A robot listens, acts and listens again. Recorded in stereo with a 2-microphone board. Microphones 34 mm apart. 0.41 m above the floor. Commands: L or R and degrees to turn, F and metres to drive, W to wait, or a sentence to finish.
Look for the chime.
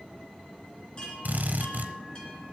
L25
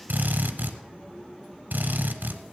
W
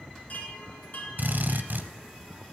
L130
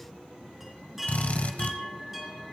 Found it: a chime, straight ahead.